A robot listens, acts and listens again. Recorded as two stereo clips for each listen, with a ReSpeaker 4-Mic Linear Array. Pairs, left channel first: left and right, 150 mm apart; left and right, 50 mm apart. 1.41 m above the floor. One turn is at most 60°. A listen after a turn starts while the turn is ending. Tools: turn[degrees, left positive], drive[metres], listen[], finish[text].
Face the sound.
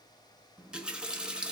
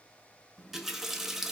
Action: turn[-30]
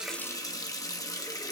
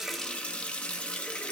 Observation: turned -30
Thought: So it is at 25° left.
Action: turn[25]
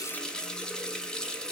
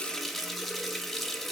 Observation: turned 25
Action: finish[Facing the running tap, 1 to 2 m away.]